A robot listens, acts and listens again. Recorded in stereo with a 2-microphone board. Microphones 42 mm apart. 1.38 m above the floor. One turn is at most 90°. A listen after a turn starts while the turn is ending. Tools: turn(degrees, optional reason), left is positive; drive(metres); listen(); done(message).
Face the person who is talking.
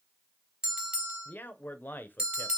turn(degrees=45, reason="The man speaking: about 45° left or 135° left.")
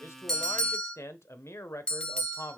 turn(degrees=85, reason="So it is at 85° left.")
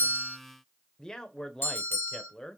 turn(degrees=15, reason="The man speaking is now 15° left.")
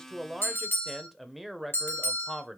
done("Facing the man speaking.")